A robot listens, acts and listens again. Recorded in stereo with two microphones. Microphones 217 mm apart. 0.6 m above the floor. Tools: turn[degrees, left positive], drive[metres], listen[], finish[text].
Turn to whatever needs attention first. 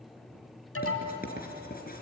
Action: turn[90]
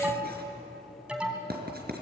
Action: finish[Found it: an alarm, straight ahead, 2 to 4 m away.]